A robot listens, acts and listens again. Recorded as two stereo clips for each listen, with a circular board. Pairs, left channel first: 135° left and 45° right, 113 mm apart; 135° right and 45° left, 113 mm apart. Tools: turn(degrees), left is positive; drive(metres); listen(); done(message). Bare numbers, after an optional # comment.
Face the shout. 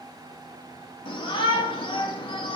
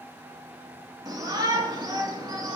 # The shout: 95° left.
turn(95)
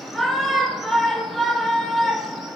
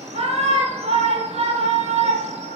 # The shout is now 45° left.
turn(45)
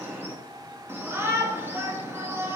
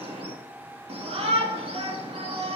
# The shout is now 20° left.
turn(20)
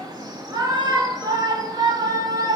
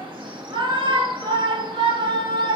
done("Found it: a shout, straight ahead, 1 to 2 m away.")